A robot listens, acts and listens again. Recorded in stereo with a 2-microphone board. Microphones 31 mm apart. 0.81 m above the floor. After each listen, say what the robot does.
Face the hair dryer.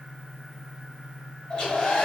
Turn 25° left.
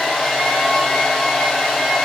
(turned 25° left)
Found it: a hair dryer, straight ahead, 1 to 2 m away.